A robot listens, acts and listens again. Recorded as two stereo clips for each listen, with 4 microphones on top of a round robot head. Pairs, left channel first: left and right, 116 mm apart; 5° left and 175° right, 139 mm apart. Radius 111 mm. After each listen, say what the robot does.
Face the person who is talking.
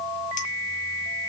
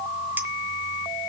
Keep listening.
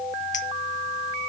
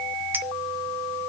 Keep listening.
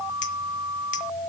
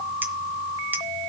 I can't make out anyone speaking.